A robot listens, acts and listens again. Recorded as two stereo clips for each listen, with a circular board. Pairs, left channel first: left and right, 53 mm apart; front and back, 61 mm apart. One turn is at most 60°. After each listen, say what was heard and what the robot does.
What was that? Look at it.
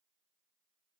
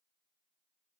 Keep listening.
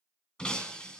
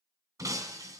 The breaking glass: 165° left. Turn 60° left.
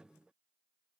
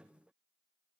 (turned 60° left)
Nothing new. It was at 105° left. Turn 60° left.
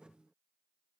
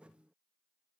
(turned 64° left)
Nothing new. It was at 40° left. Turn 40° left.
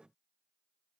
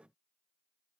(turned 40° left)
I heard breaking glass from this way, but can't make it out now.